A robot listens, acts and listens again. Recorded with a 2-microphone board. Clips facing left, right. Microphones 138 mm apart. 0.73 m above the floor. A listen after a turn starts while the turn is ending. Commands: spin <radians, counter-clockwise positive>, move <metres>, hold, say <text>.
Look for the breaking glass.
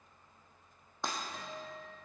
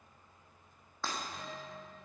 spin 0.35
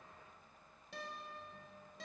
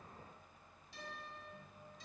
hold
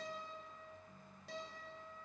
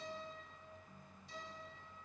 say I heard breaking glass, but can't make it out now. It was about straight ahead or 140° left.